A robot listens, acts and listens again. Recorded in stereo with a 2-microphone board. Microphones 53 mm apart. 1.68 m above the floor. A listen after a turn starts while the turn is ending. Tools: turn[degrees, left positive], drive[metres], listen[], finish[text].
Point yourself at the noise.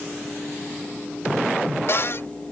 Thought: The cupboard door: about 55° left or 125° left.
Action: turn[55]
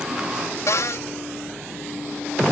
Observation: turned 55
Thought: So it is at 70° left.
Action: turn[70]
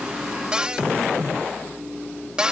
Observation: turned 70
Thought: The cupboard door is now 20° right.
Action: turn[-20]
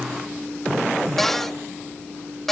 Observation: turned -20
Action: finish[Facing the cupboard door.]